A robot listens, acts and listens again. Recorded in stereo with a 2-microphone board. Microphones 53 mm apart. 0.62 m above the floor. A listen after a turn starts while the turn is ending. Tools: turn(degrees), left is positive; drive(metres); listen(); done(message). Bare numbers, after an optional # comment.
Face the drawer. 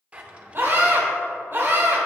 # The drawer: about 25° right or 155° right.
turn(-25)
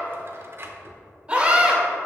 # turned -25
# So it is at 130° right.
turn(-130)
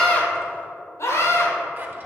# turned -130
listen()
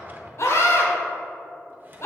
# The drawer is now 35° right.
turn(-35)
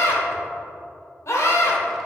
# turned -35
listen()
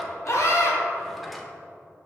done("Found it: a drawer, straight ahead.")